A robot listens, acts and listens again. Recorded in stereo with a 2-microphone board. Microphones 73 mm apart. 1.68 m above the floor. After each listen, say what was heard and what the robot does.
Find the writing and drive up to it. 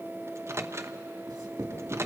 The writing: about 70° right or 110° right. Turn 70° right.
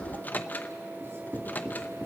So it is at 40° right. Turn 40° right.
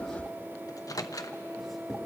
Keep listening.
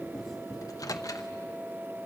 Drive 1.0 m forward.
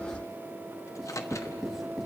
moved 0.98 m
Drive 1.0 m forward.
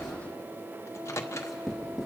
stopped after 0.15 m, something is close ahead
The writing is now 10° right. Turn 10° right.
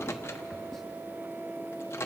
Keep listening.
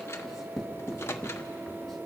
Something is in my way. I am facing the writing but have not reached it.